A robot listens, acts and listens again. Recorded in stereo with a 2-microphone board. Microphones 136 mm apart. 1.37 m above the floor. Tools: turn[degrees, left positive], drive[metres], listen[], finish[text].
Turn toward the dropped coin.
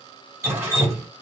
Action: listen[]
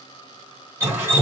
Action: listen[]
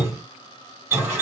Action: finish[I can't make out a dropped coin, only dripping.]